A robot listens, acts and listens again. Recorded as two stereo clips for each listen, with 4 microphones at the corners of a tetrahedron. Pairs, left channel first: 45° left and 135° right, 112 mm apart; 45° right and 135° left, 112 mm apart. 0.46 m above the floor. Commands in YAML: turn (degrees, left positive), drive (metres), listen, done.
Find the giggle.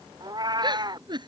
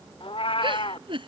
turn: 175
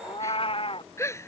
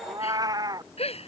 turn: -20
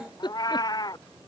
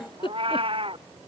done: "Facing the giggle."